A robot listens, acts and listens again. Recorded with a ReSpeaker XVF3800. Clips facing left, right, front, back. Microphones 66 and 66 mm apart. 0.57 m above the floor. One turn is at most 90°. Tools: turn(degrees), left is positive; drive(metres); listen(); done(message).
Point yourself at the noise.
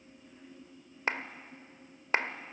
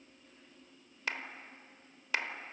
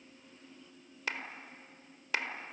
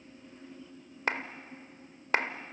turn(degrees=90)
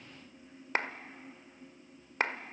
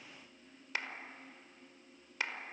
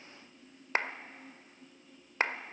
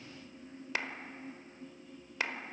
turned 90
turn(degrees=45)
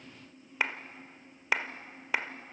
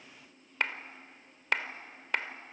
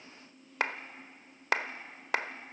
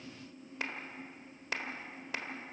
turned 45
done("Facing the clap.")